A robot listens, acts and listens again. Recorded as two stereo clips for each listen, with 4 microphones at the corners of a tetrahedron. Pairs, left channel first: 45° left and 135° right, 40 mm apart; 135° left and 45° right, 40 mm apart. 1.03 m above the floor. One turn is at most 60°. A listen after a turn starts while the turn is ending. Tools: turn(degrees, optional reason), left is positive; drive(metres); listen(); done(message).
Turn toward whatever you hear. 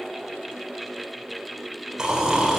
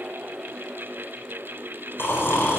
turn(degrees=60, reason="The snoring: 150° left.")
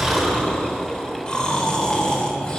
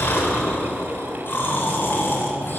turn(degrees=60, reason="The snoring is now 110° left.")
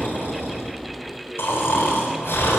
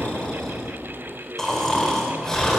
turn(degrees=55, reason="The snoring is now 55° left.")
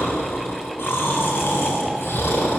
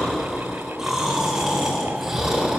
turn(degrees=30, reason="The snoring is now 30° left.")
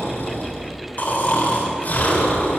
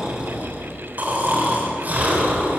done("Facing the snoring.")